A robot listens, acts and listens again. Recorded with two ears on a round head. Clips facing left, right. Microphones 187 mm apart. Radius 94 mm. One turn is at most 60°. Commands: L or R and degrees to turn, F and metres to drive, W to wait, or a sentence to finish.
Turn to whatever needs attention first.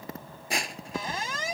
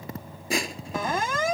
R45
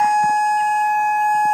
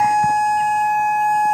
Facing the siren.